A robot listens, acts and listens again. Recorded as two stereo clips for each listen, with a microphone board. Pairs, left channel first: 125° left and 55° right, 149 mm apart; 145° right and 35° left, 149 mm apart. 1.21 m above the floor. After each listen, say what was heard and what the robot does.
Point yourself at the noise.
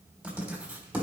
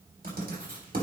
The writing: 25° left. Turn 25° left.
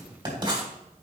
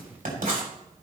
Found it: writing, straight ahead.